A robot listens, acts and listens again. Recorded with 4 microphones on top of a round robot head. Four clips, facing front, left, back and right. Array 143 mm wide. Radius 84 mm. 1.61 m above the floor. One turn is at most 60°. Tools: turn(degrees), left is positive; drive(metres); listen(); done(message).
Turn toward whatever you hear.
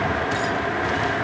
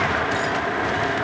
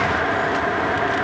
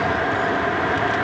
listen()
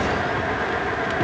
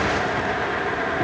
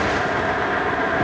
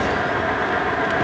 listen()
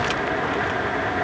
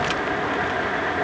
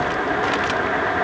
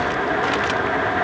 done("I can't make out anything.")